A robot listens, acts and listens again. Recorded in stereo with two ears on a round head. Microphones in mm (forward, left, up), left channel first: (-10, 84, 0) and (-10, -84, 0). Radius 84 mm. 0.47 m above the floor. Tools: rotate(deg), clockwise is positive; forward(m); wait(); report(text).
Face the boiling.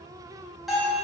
wait()
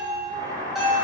rotate(35)
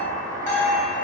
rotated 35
report("Facing the boiling.")